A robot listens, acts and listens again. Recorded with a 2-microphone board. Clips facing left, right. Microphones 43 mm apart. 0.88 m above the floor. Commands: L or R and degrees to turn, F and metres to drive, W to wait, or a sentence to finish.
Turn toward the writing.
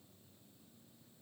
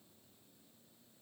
W
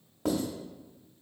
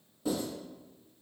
L60
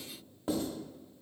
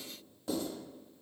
L40
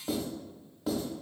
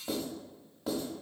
Facing the writing, 1 to 2 m away.